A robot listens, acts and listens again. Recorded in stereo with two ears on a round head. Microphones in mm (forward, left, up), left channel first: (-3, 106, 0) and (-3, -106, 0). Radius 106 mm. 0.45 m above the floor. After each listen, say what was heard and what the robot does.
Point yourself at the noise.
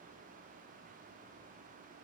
Keep listening.
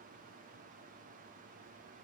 Keep listening.
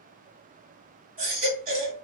The baby crying: about 35° right or 145° right. Turn 35° right.
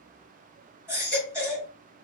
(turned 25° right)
So it is at 10° right. Turn 10° right.
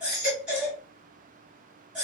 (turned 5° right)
Facing the baby crying.